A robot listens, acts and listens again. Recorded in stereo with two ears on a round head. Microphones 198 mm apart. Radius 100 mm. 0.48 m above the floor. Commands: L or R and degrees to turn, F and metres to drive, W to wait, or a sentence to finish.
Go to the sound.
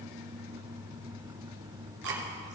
R55
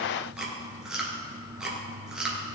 F1.0
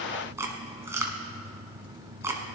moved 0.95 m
R15
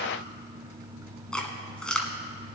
F1.0
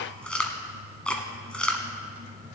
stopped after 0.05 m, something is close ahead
Arrived at the chewing, straight ahead.